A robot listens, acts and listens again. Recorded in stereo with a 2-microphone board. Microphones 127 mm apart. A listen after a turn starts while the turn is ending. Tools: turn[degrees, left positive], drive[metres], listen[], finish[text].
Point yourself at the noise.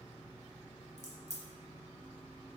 Thought: The crack: about 70° left or 110° left.
Action: turn[70]
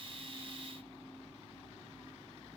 Action: listen[]
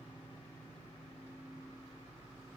Action: finish[I heard a crack, but can't make it out now. It was about straight ahead or 40° left.]